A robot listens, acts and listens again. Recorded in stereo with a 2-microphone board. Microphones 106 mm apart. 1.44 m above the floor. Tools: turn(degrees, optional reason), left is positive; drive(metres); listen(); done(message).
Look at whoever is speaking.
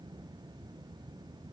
listen()
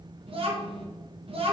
turn(degrees=-60, reason="The child speaking: about 60° right or 120° right.")
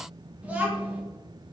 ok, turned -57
turn(degrees=-15, reason="So it is at 15° right.")
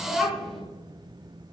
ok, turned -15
done("Found it: a child speaking, straight ahead.")